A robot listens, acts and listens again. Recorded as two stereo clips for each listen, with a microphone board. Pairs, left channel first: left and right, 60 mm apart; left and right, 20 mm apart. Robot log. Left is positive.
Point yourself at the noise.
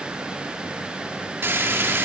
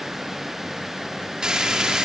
note: The frying: about 40° right or 140° right.
cmd yaw -40
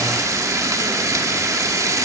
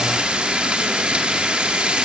note: So it is at 90° right.
cmd yaw -90
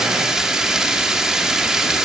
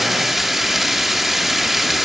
note: The frying is now 10° right.
cmd yaw -10
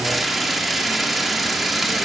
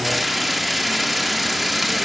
end: Facing the frying, 2 to 4 m away.